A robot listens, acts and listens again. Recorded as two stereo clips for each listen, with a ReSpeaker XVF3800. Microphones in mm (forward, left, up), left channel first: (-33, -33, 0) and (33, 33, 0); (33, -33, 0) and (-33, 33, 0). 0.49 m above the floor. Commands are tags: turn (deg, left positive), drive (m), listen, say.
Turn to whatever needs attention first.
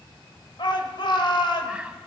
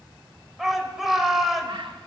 <turn deg="-140"/>
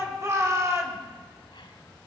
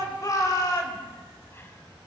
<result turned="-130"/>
<say>Facing the shout, 2 to 4 m away.</say>